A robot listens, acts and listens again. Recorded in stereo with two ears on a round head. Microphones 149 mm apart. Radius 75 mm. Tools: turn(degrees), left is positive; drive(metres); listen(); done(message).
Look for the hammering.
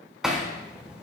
turn(degrees=-30)
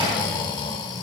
listen()
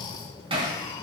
turn(degrees=-145)
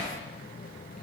listen()
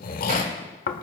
listen()
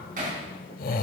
turn(degrees=-50)
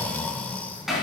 done("Facing the hammering.")